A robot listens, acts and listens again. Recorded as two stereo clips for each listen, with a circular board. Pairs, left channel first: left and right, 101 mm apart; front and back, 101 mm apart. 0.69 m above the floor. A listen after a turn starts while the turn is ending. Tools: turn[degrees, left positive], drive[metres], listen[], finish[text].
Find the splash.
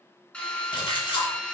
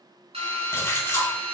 Thought: The splash: 60° left.
Action: turn[60]
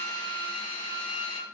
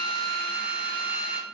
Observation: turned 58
Action: finish[Facing where the splash came from. I can't hear it now.]